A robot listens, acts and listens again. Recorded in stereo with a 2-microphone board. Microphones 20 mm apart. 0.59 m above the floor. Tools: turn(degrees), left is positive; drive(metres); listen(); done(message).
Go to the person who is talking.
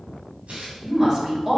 turn(degrees=-35)
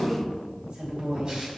turn(degrees=-110)
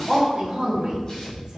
turn(degrees=-35)
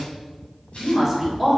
drive(metres=1.0)
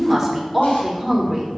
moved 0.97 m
turn(degrees=-15)
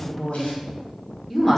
drive(metres=1.0)
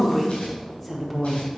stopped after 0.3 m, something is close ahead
done("Arrived at the woman speaking, straight ahead.")